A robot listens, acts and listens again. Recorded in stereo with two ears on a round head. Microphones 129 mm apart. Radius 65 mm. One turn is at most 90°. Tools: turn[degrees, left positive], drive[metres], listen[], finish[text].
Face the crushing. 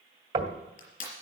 Thought: The crushing: about 55° left or 125° left.
Action: turn[55]
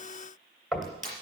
Action: finish[Facing the crushing, over 4 m away.]